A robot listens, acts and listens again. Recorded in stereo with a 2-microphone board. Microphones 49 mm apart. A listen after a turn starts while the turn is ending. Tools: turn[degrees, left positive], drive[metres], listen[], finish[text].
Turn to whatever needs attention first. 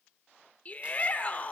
Thought: The shout: about 30° left or 150° left.
Action: turn[30]
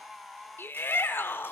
Thought: So it is at 115° left.
Action: turn[115]
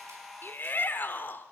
Thought: The shout is now 55° left.
Action: turn[55]
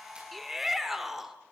Action: finish[Facing the shout.]